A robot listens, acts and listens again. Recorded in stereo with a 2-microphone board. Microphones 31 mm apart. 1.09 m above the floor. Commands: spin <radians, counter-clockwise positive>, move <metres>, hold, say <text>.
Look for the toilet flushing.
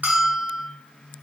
hold
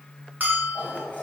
spin 1.22
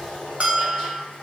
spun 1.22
spin 0.44
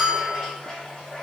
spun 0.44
spin 0.35
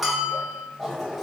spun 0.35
say Found it: a toilet flushing, straight ahead.